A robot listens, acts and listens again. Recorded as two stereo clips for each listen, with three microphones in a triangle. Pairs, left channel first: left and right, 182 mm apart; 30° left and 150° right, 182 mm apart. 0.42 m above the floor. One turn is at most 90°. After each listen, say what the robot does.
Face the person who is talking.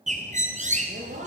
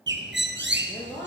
Turn 45° right.
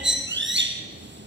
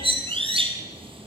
Keep listening.
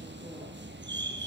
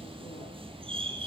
Keep listening.
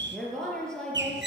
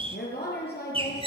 Facing the woman speaking, over 4 m away.